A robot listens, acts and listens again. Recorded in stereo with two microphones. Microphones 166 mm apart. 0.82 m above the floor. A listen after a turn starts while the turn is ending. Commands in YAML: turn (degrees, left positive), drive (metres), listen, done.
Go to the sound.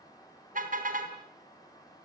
turn: -55
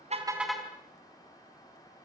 drive: 1.0
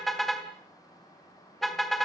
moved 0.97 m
drive: 1.0
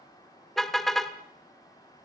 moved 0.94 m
drive: 1.0
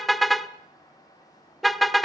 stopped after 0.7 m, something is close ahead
done: "I am next to the car horn."